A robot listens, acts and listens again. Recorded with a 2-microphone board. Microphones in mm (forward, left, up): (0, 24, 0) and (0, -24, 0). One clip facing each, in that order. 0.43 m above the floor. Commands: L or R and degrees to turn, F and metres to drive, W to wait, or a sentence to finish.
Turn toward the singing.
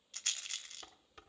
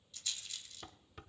W
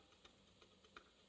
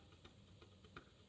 W
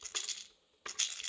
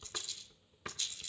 I can't make out singing to turn to.